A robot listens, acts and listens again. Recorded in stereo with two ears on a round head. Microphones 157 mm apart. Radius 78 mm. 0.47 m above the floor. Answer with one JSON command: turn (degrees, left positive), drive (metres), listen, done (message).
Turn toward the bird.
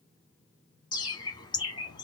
{"turn": 25}
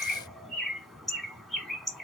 {"done": "Facing the bird, under 1 m away."}